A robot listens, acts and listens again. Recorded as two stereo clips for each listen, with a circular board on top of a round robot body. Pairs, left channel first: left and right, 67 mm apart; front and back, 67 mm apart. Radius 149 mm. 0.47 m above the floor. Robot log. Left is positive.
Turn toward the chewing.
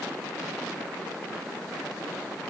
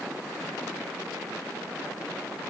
cmd idle
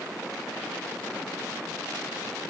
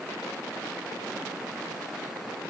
cmd idle
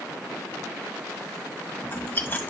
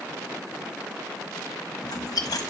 note: The chewing: 25° left.
cmd yaw +25
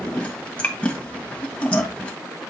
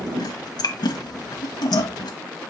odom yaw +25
note: The chewing is now 15° left.
cmd yaw +15
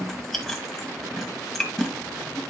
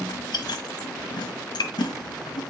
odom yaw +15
end: Found it: chewing, straight ahead, 1 to 2 m away.